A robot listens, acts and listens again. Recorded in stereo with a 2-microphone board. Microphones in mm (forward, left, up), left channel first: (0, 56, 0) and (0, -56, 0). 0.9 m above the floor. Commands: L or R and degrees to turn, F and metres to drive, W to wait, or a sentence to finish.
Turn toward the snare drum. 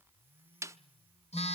R25
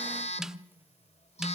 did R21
W
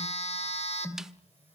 W
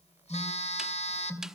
I heard a snare drum, but can't make it out now. It was about 5° right or 135° right.